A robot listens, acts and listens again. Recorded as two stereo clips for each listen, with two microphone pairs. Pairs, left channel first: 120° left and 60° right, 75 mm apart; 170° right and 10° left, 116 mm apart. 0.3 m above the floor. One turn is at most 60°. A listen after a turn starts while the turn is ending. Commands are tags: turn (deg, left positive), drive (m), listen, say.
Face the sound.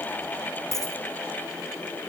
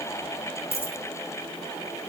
<turn deg="60"/>
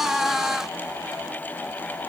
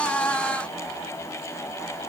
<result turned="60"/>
<turn deg="60"/>
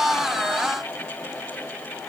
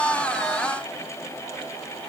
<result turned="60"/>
<turn deg="35"/>
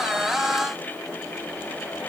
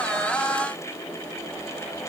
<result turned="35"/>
<say>I heard a dropped coin from this way, but can't make it out now.</say>